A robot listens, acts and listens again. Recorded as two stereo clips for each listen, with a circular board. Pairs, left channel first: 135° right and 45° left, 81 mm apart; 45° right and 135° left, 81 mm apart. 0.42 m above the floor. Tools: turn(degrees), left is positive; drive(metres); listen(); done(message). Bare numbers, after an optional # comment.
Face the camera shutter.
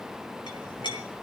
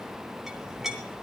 listen()
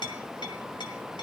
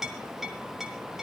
listen()
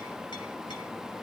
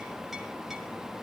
done("I can't make out a camera shutter, only a clink.")